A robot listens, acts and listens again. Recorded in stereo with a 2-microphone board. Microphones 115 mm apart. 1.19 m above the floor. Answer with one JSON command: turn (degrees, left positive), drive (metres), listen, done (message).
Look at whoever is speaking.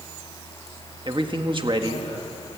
{"turn": -45}
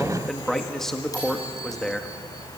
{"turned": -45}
{"done": "Found it: a man speaking, straight ahead."}